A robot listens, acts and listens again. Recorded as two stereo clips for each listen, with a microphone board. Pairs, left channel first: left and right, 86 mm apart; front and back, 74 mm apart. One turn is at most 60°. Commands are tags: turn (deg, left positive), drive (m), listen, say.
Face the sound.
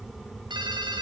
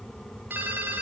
<turn deg="-60"/>
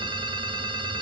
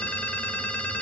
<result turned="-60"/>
<turn deg="-60"/>
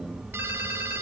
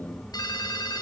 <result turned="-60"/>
<turn deg="-25"/>
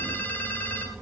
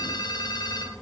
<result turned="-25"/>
<turn deg="25"/>
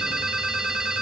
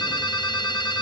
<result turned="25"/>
<say>Facing the ringtone.</say>